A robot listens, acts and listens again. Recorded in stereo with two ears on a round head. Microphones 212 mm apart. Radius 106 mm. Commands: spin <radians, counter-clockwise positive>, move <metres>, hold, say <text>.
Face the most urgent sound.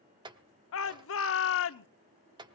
spin 0.96
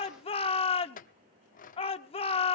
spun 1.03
spin 0.52
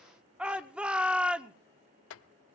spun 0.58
say Found it: a shout, straight ahead, 1 to 2 m away.